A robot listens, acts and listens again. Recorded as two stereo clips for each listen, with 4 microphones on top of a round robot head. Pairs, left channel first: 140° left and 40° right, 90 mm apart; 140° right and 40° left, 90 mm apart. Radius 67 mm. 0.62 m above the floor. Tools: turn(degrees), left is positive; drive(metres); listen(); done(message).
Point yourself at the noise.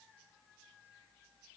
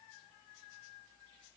listen()
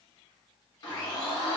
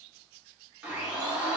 turn(degrees=115)
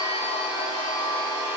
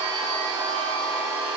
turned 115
done("Found it: a blender, straight ahead, 1 to 2 m away.")